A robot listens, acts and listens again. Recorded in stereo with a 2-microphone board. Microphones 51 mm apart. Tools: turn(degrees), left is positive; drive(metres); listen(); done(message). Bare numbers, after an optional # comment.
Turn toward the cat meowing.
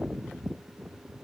listen()
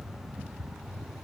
listen()
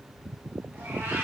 # The cat meowing: about 60° right or 120° right.
turn(-60)
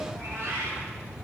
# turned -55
# So it is at 50° right.
turn(-50)
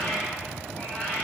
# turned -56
# The cat meowing is now 20° left.
turn(20)
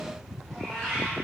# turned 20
done("Facing the cat meowing.")